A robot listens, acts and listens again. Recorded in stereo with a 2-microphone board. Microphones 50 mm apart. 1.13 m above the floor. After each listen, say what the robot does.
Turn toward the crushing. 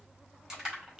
Turn 30° right.
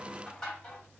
Turn 20° left.
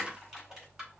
Found it: crushing, straight ahead, 2 to 4 m away.